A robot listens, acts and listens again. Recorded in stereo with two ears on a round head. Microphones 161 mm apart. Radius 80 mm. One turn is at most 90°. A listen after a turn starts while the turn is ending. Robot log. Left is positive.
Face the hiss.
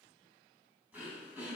cmd idle
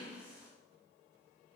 cmd idle
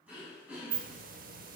note: The hiss: about 50° right or 130° right.
cmd yaw -50
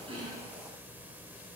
note: So it is at 10° right.
cmd yaw -10
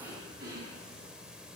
end: Facing the hiss, under 1 m away.